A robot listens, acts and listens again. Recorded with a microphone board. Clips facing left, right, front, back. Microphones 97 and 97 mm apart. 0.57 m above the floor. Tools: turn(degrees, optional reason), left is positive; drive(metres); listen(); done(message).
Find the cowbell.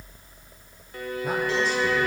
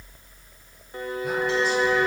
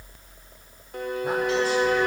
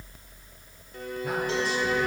listen()
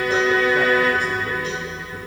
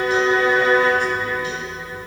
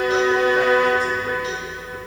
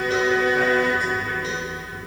listen()
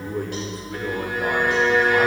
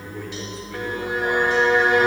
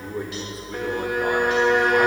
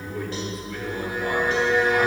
done("I can't make out a cowbell, only a violin and a man speaking.")